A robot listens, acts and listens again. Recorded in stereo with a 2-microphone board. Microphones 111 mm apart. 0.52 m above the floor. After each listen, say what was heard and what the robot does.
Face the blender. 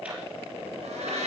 Turn 90° right.
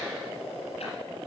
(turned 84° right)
Keep listening.
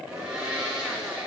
Facing the blender, over 4 m away.